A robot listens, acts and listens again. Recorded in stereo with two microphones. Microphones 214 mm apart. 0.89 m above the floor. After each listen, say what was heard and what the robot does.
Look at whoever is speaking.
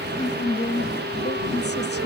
The woman speaking: about 55° left or 125° left. Turn 55° left.
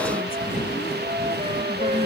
Keep listening.
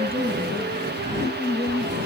So it is at 55° left. Turn 55° left.
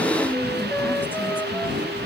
Keep listening.
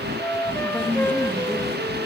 Keep listening.
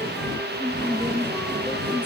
The woman speaking is now 10° left. Turn 10° left.
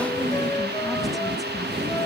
Keep listening.
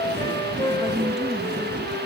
Keep listening.
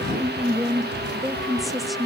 Found it: a woman speaking, straight ahead, 1 to 2 m away.